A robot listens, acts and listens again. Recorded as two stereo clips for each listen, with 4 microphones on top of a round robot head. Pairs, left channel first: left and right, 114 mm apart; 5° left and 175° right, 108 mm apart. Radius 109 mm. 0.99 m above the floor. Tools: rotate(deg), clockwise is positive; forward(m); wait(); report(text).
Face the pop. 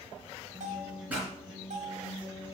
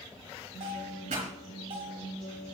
rotate(170)
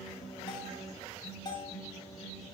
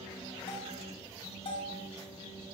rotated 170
report("Facing where the pop came from. I can't hear it now.")